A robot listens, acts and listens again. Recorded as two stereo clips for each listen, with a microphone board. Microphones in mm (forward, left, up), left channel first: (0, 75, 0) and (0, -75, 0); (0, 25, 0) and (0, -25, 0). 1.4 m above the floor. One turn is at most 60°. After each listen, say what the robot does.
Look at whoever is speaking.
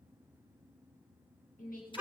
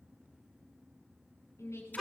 Turn 60° left.
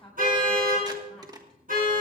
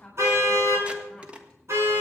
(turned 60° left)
Found it: a woman speaking, straight ahead.